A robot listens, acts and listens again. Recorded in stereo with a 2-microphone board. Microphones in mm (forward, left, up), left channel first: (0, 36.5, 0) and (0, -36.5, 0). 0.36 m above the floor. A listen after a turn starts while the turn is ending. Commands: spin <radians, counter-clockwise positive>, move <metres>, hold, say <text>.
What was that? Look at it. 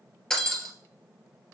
spin 0.52
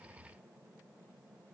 hold
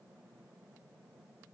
say I heard breaking glass, but can't make it out now. It was about 20° right or 140° left.